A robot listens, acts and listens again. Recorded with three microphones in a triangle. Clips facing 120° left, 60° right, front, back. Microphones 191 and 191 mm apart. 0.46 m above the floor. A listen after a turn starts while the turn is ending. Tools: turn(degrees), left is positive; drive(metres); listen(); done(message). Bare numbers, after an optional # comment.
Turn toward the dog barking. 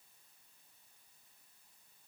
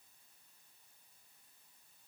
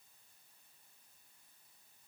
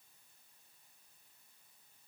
listen()
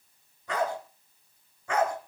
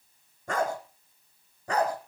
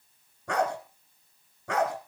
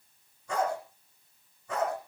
done("Facing the dog barking, 2 to 4 m away.")